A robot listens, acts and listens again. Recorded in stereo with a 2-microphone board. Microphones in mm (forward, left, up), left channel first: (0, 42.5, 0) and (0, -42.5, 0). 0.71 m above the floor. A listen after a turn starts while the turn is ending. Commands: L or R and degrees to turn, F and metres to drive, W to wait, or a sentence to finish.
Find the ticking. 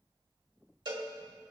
W
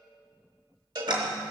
R65
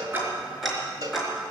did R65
Found it: ticking, straight ahead.